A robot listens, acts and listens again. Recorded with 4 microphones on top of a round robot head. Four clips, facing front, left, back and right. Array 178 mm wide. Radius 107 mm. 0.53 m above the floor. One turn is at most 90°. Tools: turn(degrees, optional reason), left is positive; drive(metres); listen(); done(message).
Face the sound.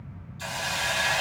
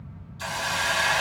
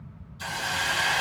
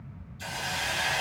turn(degrees=85, reason="The hiss: 85° left.")
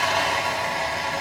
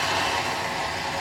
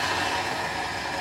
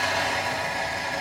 turn(degrees=15, reason="The hiss is now 15° left.")
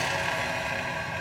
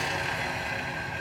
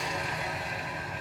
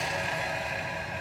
done("Found it: a hiss, straight ahead, 1 to 2 m away.")